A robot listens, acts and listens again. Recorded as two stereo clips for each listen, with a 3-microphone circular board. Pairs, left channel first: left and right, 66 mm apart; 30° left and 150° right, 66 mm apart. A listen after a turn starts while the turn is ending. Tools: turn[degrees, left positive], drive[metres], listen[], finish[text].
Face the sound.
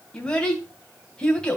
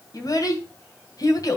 Thought: The child speaking: 15° left.
Action: turn[15]
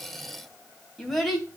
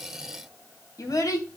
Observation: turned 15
Action: finish[Found it: a child speaking, straight ahead, 2 to 4 m away.]